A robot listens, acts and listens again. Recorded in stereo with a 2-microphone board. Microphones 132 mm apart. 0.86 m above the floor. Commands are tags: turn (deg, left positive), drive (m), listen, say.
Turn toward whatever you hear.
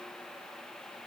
<listen/>
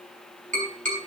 <turn deg="-90"/>
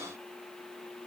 <listen/>
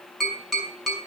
<say>Found it: tapping, straight ahead, over 4 m away.</say>